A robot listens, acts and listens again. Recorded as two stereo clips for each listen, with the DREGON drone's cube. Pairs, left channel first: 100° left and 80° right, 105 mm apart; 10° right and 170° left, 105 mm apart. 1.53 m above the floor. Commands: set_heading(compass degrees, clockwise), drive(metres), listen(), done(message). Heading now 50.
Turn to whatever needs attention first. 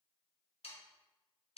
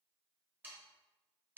listen()
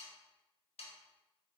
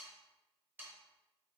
listen()
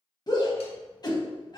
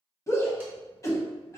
set_heading(0)
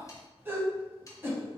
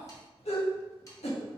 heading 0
set_heading(10)
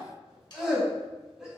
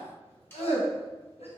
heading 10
done("Facing the shout, 1 to 2 m away.")